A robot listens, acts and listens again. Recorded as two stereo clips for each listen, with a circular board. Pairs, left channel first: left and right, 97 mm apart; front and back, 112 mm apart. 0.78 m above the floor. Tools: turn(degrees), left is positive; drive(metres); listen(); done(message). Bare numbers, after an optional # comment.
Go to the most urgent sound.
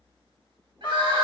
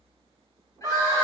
# The crying: 60° right.
turn(-60)
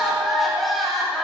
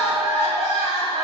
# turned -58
drive(1.0)
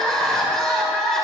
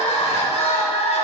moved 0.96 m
drive(1.0)
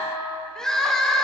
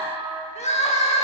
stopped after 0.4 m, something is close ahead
done("I am next to the crying.")